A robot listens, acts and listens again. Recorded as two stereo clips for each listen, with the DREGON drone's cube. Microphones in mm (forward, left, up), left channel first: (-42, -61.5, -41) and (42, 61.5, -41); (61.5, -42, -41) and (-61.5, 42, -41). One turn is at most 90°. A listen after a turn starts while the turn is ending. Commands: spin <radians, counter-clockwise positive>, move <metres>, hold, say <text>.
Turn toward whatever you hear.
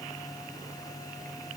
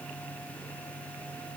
hold
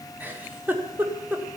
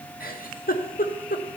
spin -0.44
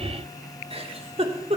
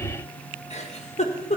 say Facing the giggle, 1 to 2 m away.